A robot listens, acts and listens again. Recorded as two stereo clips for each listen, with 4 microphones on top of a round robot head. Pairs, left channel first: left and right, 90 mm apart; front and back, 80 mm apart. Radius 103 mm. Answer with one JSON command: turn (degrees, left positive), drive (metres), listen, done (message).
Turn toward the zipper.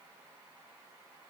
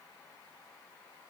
{"listen": true}
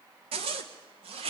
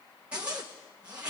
{"turn": -105}
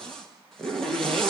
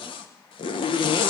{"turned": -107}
{"done": "Found it: a zipper, straight ahead."}